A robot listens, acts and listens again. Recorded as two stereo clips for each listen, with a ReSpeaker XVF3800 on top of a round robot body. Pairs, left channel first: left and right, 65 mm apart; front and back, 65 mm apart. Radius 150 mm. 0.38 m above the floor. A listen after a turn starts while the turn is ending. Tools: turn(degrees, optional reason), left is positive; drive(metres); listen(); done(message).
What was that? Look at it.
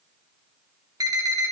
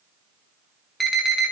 turn(degrees=-90, reason="The alarm: 90° right.")
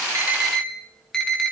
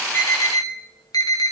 turn(degrees=10, reason="The alarm is now 10° left.")
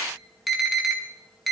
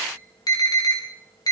done("Found it: an alarm, straight ahead, 2 to 4 m away.")